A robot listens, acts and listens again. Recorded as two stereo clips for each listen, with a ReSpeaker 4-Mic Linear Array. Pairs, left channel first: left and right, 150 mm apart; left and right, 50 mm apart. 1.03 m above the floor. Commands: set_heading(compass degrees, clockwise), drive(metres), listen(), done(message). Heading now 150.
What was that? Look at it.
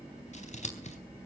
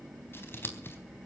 set_heading(100)
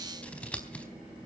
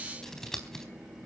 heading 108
set_heading(98)
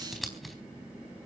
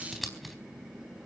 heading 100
done("Found it: scissors, straight ahead, 2 to 4 m away.")